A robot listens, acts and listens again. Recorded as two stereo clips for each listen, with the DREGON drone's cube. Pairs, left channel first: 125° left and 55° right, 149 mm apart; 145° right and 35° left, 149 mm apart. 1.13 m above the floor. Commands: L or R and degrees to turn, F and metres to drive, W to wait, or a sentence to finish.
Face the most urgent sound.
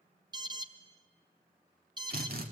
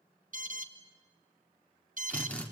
Found it: an alarm, straight ahead, 1 to 2 m away.